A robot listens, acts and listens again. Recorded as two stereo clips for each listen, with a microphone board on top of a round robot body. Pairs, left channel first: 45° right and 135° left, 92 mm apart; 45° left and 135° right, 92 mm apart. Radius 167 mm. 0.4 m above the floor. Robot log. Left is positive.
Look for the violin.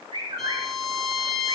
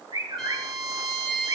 note: The violin: 135° left.
cmd yaw +135
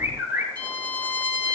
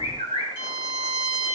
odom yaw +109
note: The violin is now 25° left.
cmd yaw +25
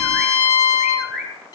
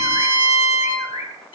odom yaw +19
end: Found it: a violin, straight ahead.